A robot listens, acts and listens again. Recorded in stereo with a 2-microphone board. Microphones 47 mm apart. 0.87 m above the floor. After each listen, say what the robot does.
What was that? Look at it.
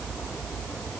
Keep listening.
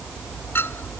Turn 55° left.
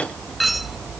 Found it: a clink, straight ahead.